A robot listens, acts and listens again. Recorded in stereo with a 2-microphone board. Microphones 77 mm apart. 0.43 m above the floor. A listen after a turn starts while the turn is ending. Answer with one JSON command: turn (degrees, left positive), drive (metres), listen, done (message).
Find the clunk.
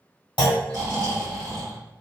{"turn": 90}
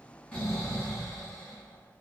{"done": "Facing where the clunk came from. I can't hear it now."}